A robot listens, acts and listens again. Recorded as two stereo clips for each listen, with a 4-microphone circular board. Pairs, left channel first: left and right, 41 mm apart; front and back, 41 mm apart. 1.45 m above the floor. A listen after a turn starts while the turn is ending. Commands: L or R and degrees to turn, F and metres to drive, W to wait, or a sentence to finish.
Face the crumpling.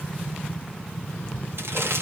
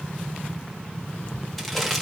R85
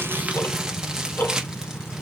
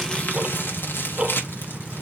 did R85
R15
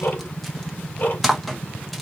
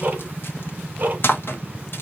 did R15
Found it: crumpling, straight ahead, 1 to 2 m away.